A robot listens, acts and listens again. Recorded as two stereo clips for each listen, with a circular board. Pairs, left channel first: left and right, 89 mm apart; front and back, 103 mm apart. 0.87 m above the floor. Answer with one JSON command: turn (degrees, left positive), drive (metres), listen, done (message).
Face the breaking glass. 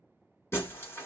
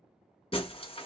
{"turn": 30}
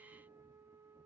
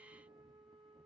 {"done": "Facing where the breaking glass came from. I can't hear it now."}